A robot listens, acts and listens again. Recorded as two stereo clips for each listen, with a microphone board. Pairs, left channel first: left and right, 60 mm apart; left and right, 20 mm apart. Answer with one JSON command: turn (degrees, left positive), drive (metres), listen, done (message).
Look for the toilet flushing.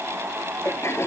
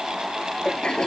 {"turn": 45}
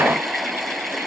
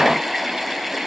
{"done": "Facing the toilet flushing."}